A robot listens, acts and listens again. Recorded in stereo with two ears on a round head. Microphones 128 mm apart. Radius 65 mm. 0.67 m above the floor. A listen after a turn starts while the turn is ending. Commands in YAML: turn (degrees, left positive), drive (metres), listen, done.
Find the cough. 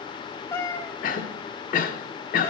turn: 65
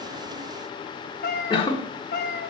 turn: 35
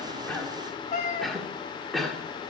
done: "Facing the cough, 1 to 2 m away."